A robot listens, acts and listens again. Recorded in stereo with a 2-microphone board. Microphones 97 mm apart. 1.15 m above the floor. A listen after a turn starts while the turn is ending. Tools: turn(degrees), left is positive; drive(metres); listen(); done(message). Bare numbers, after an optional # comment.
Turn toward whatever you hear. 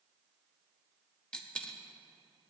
turn(30)
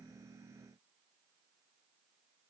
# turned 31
listen()
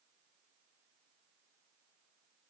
done("I heard a dropped coin, but can't make it out now. It was about 20° right or 140° left.")